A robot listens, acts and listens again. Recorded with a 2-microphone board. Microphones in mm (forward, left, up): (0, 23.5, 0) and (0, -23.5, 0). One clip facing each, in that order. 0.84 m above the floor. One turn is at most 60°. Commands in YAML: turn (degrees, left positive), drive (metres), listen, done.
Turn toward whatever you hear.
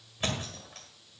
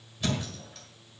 turn: 40
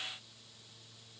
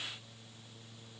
listen: true
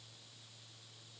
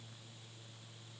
done: "I heard a thud, but can't make it out now. It was about straight ahead or 100° left."